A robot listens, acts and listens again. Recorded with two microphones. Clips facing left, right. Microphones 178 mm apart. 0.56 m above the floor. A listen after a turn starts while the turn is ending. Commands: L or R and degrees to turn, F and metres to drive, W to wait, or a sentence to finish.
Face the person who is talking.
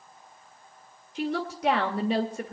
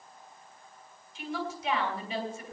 L60
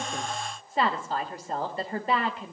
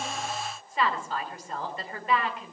L40
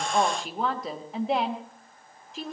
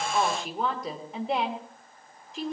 Found it: a woman speaking, straight ahead, 1 to 2 m away.